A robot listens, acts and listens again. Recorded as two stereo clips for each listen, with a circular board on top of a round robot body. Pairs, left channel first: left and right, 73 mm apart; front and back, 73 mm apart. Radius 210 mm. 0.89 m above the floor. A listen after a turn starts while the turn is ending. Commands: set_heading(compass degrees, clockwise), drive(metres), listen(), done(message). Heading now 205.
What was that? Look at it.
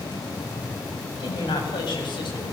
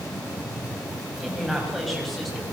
set_heading(115)
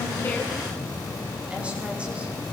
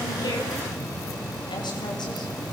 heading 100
set_heading(115)
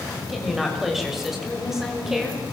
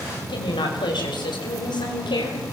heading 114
done("Found it: a woman speaking, straight ahead.")